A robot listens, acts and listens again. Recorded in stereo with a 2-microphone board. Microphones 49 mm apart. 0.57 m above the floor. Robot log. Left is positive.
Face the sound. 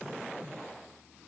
cmd idle
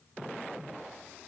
cmd idle
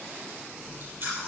note: The chewing: about 50° right or 130° right.
cmd yaw -50
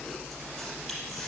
end: Facing the chewing, over 4 m away.